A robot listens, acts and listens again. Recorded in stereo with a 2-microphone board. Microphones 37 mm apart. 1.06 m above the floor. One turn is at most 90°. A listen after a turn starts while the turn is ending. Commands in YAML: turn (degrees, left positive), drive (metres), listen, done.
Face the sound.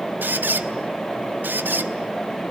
turn: -65
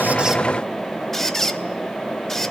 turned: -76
turn: 10
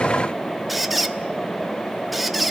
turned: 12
done: "Found it: a squeak, straight ahead, 1 to 2 m away."